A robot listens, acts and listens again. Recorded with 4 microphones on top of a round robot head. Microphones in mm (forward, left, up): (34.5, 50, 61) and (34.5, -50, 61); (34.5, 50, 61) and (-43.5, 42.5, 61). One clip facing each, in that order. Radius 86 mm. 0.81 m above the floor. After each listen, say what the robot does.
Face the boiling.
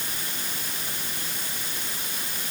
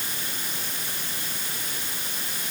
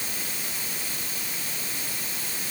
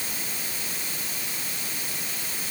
Keep listening.
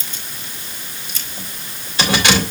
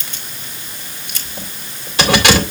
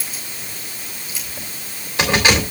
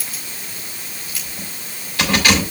Keep listening.
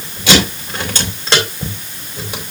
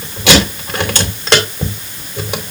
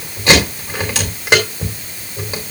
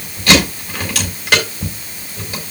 I can't make out boiling, only keys jangling.